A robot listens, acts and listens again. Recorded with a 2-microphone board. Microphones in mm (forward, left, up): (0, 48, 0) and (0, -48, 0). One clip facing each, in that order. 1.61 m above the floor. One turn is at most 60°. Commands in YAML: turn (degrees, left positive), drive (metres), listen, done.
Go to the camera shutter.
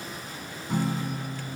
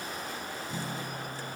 listen: true
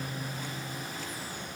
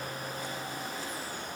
listen: true
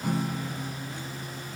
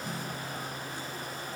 done: "I can't make out a camera shutter to turn to."